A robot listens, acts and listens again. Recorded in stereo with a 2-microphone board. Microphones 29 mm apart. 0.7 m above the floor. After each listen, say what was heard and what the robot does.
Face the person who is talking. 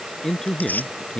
The man speaking: about 25° left or 155° left. Turn 25° left.
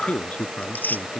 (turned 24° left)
So it is at 125° left. Turn 125° left.
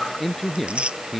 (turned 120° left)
Facing the man speaking.